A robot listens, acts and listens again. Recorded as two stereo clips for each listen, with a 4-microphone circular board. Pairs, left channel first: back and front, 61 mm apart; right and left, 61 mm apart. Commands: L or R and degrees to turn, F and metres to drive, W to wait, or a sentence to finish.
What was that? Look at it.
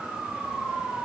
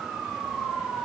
W
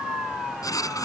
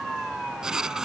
L170
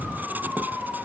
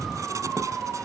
W
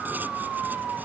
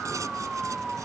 W
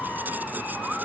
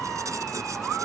L60
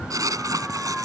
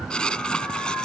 R15
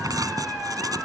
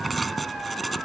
Facing the writing.